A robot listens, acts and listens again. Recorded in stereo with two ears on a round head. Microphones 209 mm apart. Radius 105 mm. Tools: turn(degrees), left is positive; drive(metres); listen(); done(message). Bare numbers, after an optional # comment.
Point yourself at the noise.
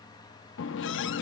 # The running tap: about 55° left or 125° left.
turn(55)
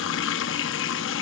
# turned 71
# So it is at 55° left.
turn(55)
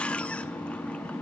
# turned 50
done("Found it: a running tap, straight ahead.")